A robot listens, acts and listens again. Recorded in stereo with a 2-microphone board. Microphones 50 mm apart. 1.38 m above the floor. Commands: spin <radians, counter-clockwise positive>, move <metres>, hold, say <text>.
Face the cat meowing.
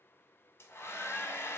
hold
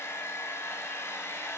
hold
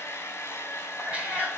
spin -0.44
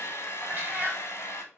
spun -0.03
spin -0.70
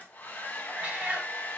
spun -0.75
spin -0.52
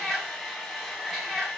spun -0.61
say Found it: a cat meowing, straight ahead, 1 to 2 m away.